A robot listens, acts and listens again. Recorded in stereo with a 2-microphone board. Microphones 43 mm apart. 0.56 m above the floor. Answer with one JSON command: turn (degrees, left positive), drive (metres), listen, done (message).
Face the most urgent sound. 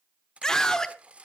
{"turn": 15}
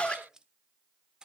{"turn": 155}
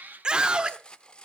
{"turn": -25}
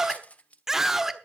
{"turn": -15}
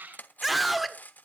{"done": "Found it: a scream, straight ahead."}